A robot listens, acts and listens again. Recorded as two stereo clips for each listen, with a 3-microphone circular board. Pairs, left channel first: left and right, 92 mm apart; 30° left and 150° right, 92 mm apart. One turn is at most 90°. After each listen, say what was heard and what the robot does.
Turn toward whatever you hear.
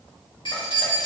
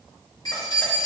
The keys jangling: 65° left. Turn 65° left.
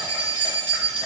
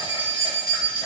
The keys jangling is now 10° left. Turn 10° left.
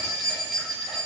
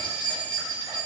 The keys jangling is now 10° right. Turn 10° right.
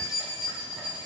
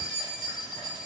The keys jangling is now 10° right. Turn 10° right.
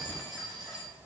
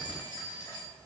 Facing the keys jangling.